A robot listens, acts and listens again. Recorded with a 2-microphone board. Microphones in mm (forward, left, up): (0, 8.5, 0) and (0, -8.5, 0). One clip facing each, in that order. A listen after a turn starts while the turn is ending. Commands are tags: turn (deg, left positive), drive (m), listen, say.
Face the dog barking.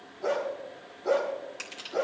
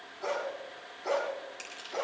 <turn deg="-35"/>
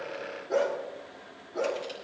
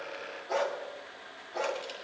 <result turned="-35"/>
<turn deg="-105"/>
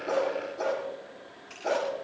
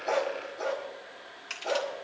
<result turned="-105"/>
<turn deg="15"/>
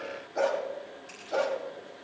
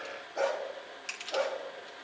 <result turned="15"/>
<turn deg="10"/>
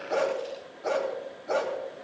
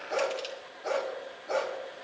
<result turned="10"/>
<say>Facing the dog barking.</say>